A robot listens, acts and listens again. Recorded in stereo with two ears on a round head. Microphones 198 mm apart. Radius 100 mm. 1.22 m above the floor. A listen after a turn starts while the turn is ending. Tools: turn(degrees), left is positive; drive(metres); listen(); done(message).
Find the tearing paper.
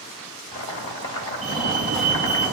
listen()
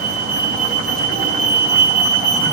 listen()
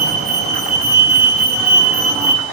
done("I can't make out tearing paper to turn to.")